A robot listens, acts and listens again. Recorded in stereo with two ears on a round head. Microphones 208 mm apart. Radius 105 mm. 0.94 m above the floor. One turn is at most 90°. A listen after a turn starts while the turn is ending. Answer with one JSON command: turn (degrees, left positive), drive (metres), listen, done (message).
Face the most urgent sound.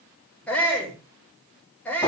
{"turn": 30}
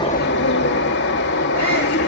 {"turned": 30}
{"listen": true}
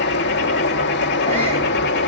{"listen": true}
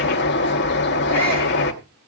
{"done": "I heard a shout, but can't make it out now. It was about 25° right or 145° left."}